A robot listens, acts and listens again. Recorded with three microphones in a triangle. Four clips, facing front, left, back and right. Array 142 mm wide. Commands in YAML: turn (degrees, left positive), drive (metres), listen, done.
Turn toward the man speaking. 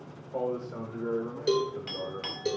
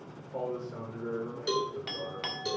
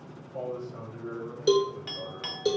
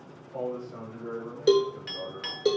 done: "Facing the man speaking."